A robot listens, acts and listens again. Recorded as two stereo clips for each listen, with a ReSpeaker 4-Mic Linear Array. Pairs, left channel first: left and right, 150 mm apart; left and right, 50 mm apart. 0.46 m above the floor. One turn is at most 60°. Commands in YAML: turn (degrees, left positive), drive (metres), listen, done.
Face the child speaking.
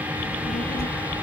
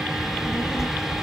turn: 60
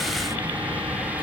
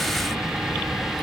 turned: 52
turn: 40
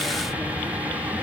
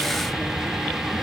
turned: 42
listen: true
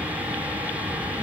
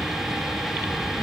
done: "I heard a child speaking from this way, but can't make it out now."